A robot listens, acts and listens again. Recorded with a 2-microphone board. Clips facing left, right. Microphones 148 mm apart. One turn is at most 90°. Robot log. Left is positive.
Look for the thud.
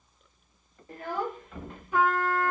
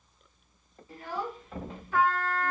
note: The thud: about 40° right or 140° right.
cmd yaw -40
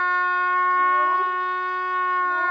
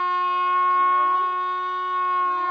cmd idle
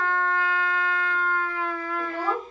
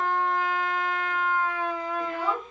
end: I heard a thud, but can't make it out now. It was about straight ahead or 100° right.